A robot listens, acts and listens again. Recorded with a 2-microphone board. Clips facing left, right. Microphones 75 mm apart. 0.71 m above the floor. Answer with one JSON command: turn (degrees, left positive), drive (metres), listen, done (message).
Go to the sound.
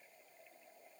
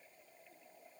{"listen": true}
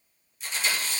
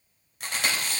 {"turn": -60}
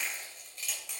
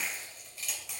{"drive": 1.0}
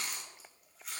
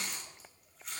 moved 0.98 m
{"drive": 1.0}
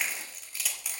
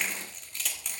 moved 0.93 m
{"drive": 1.0}
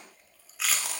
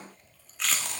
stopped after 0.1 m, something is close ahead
{"done": "Arrived at the chewing, straight ahead."}